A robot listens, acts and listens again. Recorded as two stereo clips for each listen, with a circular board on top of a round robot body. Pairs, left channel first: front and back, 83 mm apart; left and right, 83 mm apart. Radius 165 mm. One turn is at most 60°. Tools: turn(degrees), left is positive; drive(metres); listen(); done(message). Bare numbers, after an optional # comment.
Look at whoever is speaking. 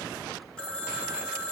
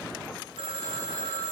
listen()
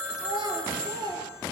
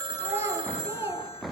# The child speaking: 150° right.
turn(-60)
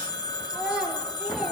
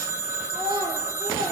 # The child speaking is now 105° right.
turn(-60)
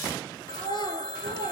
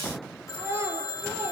# The child speaking is now 30° right.
turn(-30)
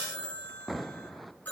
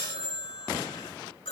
listen()
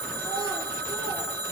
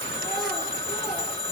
listen()
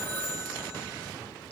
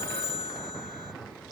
done("Facing where the child speaking came from. I can't hear it now.")